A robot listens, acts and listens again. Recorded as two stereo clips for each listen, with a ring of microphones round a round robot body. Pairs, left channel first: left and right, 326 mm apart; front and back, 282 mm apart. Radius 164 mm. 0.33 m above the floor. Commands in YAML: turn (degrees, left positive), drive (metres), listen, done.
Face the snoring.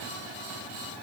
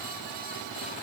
listen: true
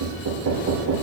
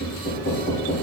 listen: true
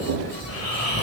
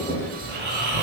turn: 130
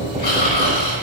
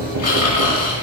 turn: 30
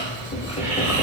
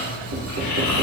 turn: -10
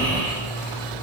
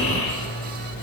done: "Facing the snoring, 2 to 4 m away."